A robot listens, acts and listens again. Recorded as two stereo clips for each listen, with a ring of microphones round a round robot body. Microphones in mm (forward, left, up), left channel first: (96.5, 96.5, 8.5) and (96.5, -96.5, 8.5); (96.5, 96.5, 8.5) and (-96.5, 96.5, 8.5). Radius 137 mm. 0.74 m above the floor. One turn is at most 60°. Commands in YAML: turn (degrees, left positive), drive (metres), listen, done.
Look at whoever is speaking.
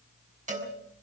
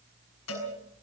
listen: true
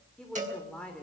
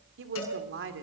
turn: 60
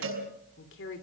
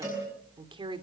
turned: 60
turn: 60
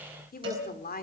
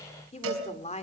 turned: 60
turn: 55
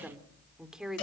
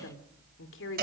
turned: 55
done: "Found it: a woman speaking, straight ahead."